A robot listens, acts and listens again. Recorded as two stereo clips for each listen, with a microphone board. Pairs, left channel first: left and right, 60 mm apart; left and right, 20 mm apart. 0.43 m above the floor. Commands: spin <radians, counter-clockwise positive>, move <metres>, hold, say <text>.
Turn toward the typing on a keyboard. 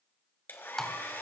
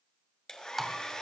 spin 0.52
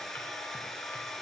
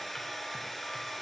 hold
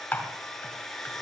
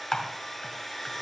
spin 2.53
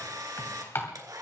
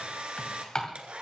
spin 0.87
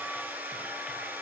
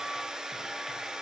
hold
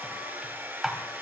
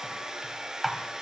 say Found it: typing on a keyboard, straight ahead, 2 to 4 m away.